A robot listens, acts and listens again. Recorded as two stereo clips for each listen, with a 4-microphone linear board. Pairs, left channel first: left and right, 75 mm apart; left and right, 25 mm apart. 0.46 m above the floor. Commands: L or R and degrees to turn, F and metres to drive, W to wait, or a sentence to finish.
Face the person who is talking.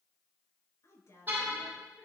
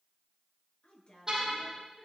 L45
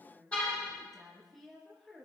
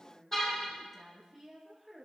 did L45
Found it: a woman speaking, straight ahead, over 4 m away.